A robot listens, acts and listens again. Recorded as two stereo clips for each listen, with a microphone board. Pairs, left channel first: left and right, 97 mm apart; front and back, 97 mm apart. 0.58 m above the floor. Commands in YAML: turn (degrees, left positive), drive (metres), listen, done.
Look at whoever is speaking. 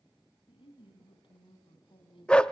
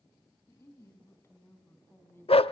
turn: 65
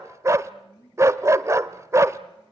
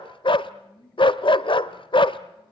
turn: 35
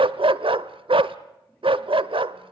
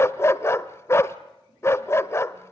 listen: true
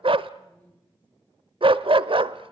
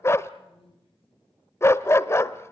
turn: 15
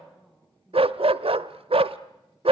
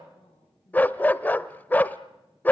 done: "Facing the woman speaking, over 4 m away."